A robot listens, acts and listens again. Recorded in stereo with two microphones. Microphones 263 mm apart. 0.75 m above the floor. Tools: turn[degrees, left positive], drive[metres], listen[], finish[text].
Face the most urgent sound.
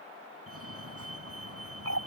Thought: The fire alarm: about 60° right or 120° right.
Action: turn[-60]
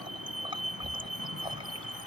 Thought: So it is at 60° right.
Action: turn[-60]
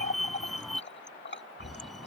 Action: finish[Facing the fire alarm.]